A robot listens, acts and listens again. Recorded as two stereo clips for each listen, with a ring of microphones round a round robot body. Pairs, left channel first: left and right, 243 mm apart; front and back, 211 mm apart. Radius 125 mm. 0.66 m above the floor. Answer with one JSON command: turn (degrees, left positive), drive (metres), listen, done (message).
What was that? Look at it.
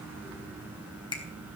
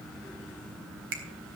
{"turn": 160}
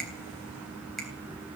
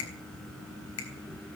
{"done": "Facing the finger snap."}